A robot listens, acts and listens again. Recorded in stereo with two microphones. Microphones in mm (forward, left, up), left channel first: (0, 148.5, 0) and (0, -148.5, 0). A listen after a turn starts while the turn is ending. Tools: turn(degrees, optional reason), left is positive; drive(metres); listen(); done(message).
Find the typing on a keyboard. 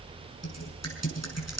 turn(degrees=60, reason="The typing on a keyboard: about 60° left or 120° left.")
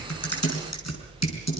turn(degrees=60, reason="So it is at 60° left.")
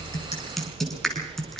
done("Found it: typing on a keyboard, straight ahead, over 4 m away.")